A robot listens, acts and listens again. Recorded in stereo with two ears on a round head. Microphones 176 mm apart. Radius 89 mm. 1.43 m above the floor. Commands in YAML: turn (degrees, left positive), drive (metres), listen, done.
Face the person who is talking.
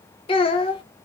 turn: 25
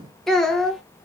done: "Found it: a child speaking, straight ahead."